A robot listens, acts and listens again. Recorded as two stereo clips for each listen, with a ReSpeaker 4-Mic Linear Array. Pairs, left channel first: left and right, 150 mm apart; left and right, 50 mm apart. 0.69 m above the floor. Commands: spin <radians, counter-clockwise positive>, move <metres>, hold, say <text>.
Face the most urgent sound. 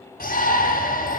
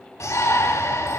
spin 1.57
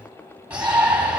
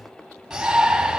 spin -0.17
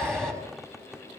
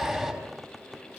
say Found it: a shout, straight ahead, over 4 m away.